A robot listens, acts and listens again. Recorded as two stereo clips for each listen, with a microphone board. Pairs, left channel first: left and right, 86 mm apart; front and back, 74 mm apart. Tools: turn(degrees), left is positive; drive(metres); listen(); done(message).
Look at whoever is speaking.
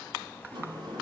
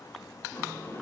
listen()
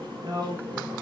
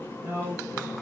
turn(degrees=-125)
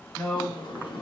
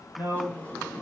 done("Found it: a man speaking, straight ahead, 1 to 2 m away.")